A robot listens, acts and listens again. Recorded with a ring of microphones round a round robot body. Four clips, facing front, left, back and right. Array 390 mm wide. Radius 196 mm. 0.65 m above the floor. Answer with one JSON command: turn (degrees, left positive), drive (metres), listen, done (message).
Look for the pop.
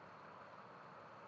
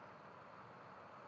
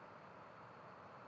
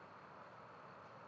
{"listen": true}
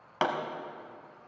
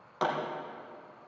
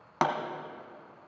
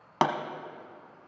{"turn": -105}
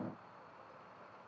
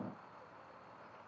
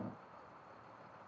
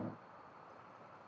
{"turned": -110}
{"done": "Facing where the pop came from. I can't hear it now."}